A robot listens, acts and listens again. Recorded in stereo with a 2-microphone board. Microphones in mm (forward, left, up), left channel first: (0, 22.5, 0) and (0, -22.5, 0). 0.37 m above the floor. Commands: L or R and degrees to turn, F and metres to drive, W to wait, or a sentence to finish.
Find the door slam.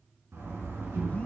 R65
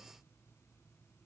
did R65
W
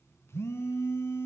I heard a door slam, but can't make it out now. It was about straight ahead or 50° right.